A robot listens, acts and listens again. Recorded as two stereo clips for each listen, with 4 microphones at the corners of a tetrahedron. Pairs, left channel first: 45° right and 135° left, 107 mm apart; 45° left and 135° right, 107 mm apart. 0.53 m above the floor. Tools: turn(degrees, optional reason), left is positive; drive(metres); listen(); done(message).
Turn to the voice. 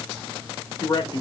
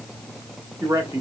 turn(degrees=-80, reason="The man speaking: 80° right.")
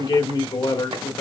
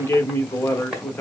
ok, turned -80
turn(degrees=-20, reason="The man speaking is now 20° right.")
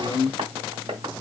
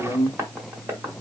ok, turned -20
done("Facing the man speaking.")